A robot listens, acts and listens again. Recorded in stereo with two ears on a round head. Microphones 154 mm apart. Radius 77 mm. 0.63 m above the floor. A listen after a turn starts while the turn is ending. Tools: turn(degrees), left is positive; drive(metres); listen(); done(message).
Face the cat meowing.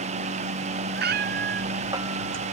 turn(degrees=-65)
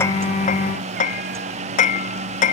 listen()
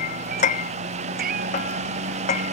turn(degrees=-50)
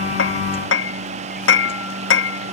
listen()
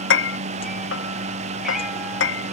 listen()
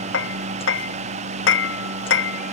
done("I heard a cat meowing from this way, but can't make it out now.")